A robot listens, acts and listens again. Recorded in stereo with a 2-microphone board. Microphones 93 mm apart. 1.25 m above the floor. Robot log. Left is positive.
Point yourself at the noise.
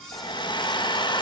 note: The hair dryer: about 55° left or 125° left.
cmd yaw +55
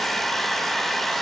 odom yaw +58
end: Found it: a hair dryer, straight ahead.